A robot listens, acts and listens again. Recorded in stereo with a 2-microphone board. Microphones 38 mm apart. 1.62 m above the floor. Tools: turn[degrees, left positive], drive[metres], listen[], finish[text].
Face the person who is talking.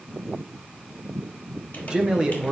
Thought: The man speaking: about 20° right or 160° right.
Action: turn[-20]
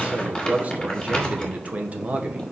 Thought: So it is at 140° right.
Action: turn[-140]
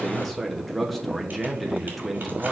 Action: finish[Facing the man speaking, under 1 m away.]